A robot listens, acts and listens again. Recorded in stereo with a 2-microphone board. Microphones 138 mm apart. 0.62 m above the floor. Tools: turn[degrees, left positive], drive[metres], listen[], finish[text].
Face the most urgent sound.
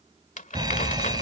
Thought: The fire alarm: about 30° right or 150° right.
Action: turn[-30]
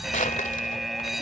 Action: finish[Facing the fire alarm.]